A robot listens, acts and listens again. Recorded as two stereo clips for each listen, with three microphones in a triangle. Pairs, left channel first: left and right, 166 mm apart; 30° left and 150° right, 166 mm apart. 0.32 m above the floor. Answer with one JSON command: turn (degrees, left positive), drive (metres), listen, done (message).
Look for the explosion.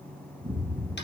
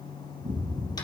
{"turn": -155}
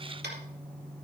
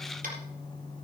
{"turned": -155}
{"done": "Facing where the explosion came from. I can't hear it now."}